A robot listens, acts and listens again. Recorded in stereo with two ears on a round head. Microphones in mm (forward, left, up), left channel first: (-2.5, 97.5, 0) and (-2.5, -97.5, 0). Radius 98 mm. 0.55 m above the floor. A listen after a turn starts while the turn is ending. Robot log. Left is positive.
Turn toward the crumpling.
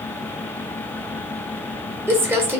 cmd yaw -30
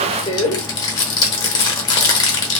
note: So it is at 20° left.
cmd yaw +20
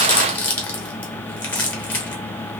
note: The crumpling is now 10° left.
cmd yaw +10
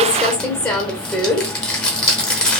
end: Found it: crumpling, straight ahead, under 1 m away.